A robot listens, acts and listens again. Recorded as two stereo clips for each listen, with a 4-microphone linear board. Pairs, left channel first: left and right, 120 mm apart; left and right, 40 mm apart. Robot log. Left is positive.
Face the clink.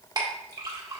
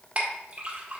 note: The clink: about 35° right or 145° right.
cmd yaw -35
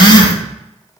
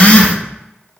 cmd idle
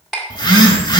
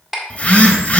end: Facing the clink, 1 to 2 m away.